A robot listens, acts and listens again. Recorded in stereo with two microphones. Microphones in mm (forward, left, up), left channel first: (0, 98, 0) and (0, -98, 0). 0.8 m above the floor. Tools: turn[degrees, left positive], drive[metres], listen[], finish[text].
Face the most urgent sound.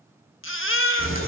Action: turn[90]
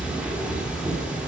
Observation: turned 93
Action: listen[]
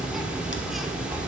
Action: listen[]
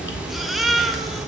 Action: finish[Facing the baby crying.]